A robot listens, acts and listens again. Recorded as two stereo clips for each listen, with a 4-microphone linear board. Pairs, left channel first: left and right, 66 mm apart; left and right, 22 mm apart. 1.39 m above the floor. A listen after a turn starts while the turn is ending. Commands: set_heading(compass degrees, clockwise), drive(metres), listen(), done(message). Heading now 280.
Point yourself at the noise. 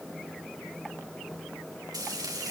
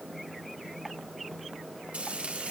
set_heading(10)
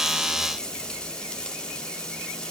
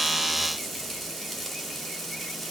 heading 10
set_heading(355)
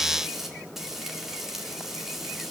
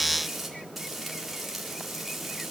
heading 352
done("Facing the frying, over 4 m away.")